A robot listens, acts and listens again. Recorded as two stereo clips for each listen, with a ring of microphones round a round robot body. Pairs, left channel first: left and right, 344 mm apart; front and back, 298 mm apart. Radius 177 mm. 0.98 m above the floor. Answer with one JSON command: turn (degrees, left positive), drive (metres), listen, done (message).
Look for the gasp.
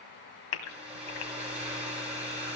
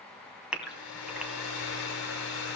{"turn": 95}
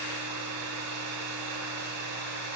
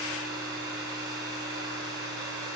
{"done": "I heard a gasp from this way, but can't make it out now."}